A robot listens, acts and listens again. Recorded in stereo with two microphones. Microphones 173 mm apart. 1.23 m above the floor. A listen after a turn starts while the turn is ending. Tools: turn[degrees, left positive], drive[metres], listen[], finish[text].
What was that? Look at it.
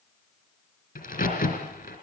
Thought: The crack: about 50° left or 130° left.
Action: turn[50]
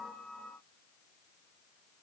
Action: listen[]
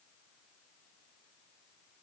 Action: finish[I heard a crack, but can't make it out now. It was about straight ahead or 80° left.]